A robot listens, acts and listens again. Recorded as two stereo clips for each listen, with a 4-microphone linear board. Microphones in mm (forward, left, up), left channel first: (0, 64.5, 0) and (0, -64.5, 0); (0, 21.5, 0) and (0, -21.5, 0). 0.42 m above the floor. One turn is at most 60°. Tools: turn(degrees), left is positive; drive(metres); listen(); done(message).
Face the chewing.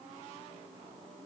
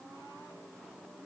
listen()
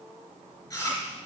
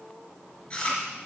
turn(degrees=20)
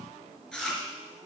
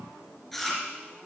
done("Facing the chewing, 2 to 4 m away.")